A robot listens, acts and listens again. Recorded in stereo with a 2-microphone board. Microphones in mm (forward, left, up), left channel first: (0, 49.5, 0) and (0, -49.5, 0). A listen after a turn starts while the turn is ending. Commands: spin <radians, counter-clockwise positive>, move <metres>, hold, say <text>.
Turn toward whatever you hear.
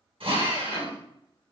spin -1.13
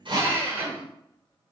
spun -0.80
spin -0.35
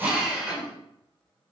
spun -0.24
say Found it: a drill, straight ahead.